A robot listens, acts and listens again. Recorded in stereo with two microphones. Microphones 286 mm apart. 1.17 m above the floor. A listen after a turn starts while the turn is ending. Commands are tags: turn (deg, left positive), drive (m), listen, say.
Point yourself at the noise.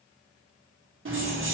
<turn deg="-50"/>
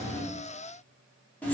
<say>Found it: keys jangling, straight ahead, under 1 m away.</say>